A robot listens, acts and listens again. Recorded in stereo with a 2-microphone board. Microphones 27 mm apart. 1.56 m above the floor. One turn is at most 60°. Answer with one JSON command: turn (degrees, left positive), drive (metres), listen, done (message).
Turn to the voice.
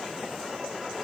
{"listen": true}
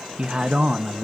{"turn": -40}
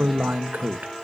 {"turn": -60}
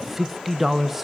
{"turn": -10}
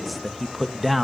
{"done": "Facing the man speaking."}